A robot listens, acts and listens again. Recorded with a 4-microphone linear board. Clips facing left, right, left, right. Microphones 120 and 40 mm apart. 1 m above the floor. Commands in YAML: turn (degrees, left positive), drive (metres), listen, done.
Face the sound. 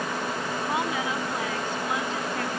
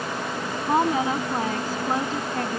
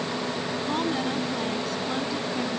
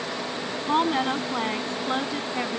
turn: -40
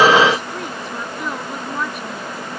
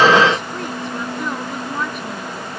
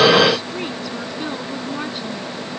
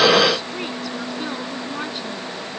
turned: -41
listen: true
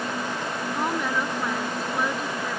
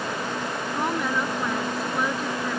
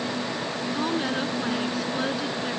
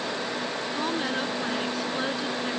listen: true
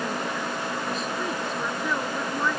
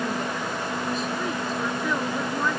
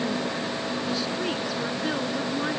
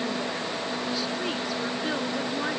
done: "I heard a woman speaking, but can't make it out now. It was about straight ahead or 100° right."